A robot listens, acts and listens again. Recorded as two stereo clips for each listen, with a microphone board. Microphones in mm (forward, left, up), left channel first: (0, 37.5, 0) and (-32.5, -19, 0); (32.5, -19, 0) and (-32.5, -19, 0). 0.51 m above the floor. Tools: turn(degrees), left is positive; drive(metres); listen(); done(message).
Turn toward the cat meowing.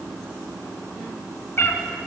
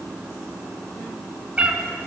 turn(degrees=110)
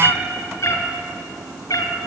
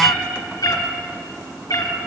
turn(degrees=20)
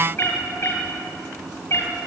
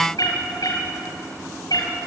turn(degrees=10)
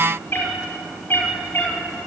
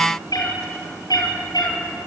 done("Found it: a cat meowing, straight ahead.")